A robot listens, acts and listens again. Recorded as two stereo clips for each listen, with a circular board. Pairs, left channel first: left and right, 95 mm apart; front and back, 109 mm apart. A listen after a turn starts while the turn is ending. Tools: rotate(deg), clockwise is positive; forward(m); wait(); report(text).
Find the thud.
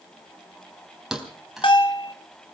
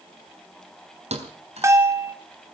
rotate(175)
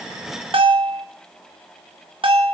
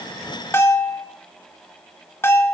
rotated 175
report("Facing where the thud came from. I can't hear it now.")